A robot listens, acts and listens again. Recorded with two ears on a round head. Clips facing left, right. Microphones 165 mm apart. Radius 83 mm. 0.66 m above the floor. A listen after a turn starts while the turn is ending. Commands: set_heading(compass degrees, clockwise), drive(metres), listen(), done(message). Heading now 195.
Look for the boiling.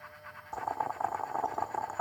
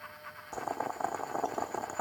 set_heading(235)
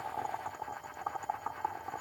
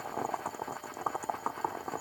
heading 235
set_heading(335)
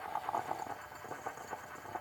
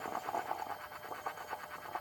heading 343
set_heading(333)
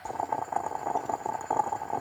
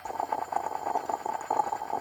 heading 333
done("Found it: boiling, straight ahead.")